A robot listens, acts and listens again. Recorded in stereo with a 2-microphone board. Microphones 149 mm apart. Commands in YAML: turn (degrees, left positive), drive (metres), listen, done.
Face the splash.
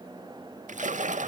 turn: -60
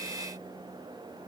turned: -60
listen: true
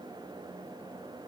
done: "I heard a splash, but can't make it out now. It was about straight ahead or 60° right."